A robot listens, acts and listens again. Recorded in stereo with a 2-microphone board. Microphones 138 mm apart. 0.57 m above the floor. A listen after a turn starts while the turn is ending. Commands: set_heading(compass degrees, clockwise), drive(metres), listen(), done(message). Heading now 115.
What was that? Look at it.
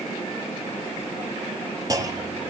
set_heading(145)
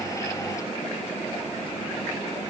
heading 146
listen()
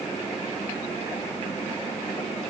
done("I heard a clunk, but can't make it out now. It was about 5° left or 120° right.")